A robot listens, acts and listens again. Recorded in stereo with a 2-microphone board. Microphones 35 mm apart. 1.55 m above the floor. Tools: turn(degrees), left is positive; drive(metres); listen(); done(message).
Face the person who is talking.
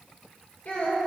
turn(degrees=45)
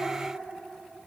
listen()
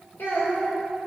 turn(degrees=85)
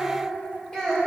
turn(degrees=30)
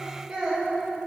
done("Found it: a child speaking, straight ahead, 2 to 4 m away.")